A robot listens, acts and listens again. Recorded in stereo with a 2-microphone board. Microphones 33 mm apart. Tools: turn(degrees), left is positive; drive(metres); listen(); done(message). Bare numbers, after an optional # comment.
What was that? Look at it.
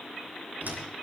# The door slam: about 65° right or 115° right.
turn(-65)
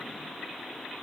listen()
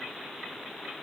done("I heard a door slam, but can't make it out now. It was about straight ahead or 50° right.")